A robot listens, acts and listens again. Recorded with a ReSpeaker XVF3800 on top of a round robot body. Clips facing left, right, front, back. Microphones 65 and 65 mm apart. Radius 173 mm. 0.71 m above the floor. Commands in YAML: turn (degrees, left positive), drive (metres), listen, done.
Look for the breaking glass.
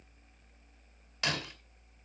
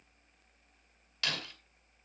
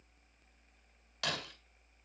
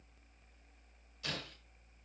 turn: 20
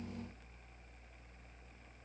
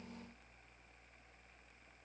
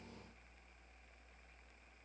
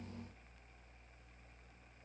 done: "Facing where the breaking glass came from. I can't hear it now."